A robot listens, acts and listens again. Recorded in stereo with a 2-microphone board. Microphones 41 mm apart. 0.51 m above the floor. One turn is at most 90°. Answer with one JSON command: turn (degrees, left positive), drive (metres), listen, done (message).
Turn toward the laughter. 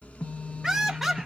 {"turn": 30}
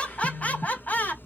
{"turn": 90}
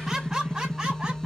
{"turn": -15}
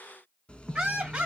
{"turn": -25}
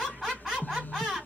{"done": "Facing the laughter, 2 to 4 m away."}